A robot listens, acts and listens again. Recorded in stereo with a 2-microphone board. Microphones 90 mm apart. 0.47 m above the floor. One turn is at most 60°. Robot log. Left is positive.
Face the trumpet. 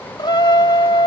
note: The trumpet: about 55° left or 125° left.
cmd yaw +55
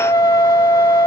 note: So it is at 55° left.
cmd yaw +55
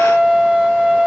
note: The trumpet is now 10° right.
cmd yaw -10
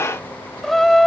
end: Found it: a trumpet, straight ahead.